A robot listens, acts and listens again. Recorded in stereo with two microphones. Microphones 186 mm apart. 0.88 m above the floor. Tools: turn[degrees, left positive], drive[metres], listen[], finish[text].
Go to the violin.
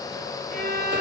Thought: The violin: about 55° right or 125° right.
Action: turn[-55]
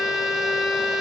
Action: drive[1.0]
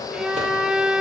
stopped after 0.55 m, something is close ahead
Action: finish[Blocked. The violin is further on, straight ahead.]